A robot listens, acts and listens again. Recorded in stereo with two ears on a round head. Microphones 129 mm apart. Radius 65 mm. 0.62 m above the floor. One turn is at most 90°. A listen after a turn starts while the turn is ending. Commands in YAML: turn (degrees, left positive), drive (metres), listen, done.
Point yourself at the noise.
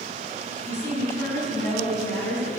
turn: 20
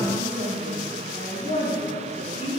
turn: 90
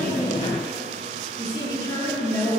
turn: 25
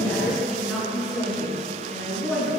done: "Found it: a woman speaking, straight ahead."